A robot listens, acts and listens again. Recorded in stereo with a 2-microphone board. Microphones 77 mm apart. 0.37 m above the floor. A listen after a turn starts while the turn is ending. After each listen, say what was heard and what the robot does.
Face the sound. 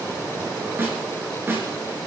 The snare drum: about 30° right or 150° right. Turn 30° right.
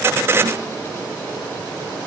Keep listening.
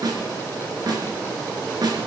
So it is at 125° right. Turn 125° right.
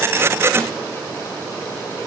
Keep listening.
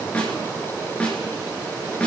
The snare drum is now 15° left. Turn 15° left.
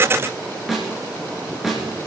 Found it: a snare drum, straight ahead, 2 to 4 m away.